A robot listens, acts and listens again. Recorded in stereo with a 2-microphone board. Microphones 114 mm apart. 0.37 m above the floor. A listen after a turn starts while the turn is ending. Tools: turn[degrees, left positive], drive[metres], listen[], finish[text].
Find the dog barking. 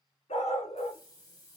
Thought: The dog barking: about 65° left or 115° left.
Action: turn[65]
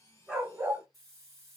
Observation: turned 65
Thought: So it is at 30° right.
Action: turn[-30]
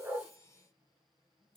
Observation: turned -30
Action: listen[]
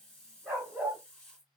Thought: The dog barking is now 15° right.
Action: turn[-15]
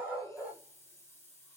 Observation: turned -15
Action: finish[Facing the dog barking, 2 to 4 m away.]